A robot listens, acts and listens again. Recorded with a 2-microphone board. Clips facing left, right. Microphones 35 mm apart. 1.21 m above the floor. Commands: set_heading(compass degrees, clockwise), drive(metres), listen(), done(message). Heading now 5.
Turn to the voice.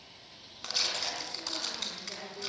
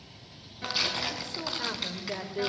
set_heading(60)
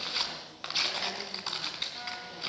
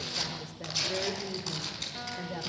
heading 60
set_heading(130)
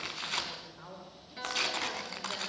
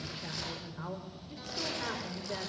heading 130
set_heading(150)
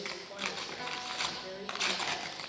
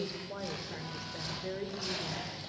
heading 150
set_heading(160)
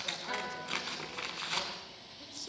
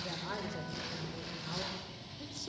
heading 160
listen()
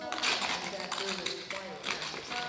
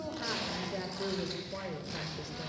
done("Found it: a woman speaking, straight ahead, over 4 m away.")